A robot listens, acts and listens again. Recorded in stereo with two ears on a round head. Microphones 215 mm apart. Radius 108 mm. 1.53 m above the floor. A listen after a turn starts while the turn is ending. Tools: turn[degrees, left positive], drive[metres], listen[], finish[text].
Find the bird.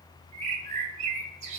Thought: The bird: about 30° right or 150° right.
Action: turn[-30]
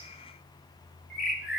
Action: finish[Facing the bird.]